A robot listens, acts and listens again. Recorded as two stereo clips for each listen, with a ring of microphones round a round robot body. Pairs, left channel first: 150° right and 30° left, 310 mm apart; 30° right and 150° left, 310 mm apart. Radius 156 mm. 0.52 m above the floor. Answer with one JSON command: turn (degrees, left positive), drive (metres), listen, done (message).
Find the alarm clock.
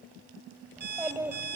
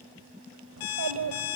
{"turn": -30}
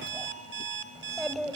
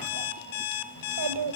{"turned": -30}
{"turn": -25}
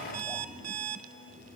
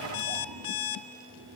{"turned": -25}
{"turn": -10}
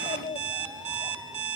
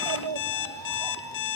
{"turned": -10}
{"done": "Facing the alarm clock, 1 to 2 m away."}